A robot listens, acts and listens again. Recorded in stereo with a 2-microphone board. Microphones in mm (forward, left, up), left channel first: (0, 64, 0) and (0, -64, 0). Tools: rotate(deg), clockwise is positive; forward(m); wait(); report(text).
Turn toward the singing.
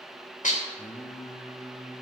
rotate(-55)
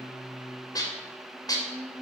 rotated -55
report("Found it: singing, straight ahead.")